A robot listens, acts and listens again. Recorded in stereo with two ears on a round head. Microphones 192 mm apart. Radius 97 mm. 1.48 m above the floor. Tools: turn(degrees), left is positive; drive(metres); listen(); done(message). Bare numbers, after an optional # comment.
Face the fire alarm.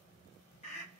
listen()
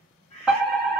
turn(30)
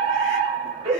# So it is at 30° right.
turn(-30)
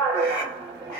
# The fire alarm is now 20° right.
turn(-20)
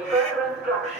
done("Facing the fire alarm, 1 to 2 m away.")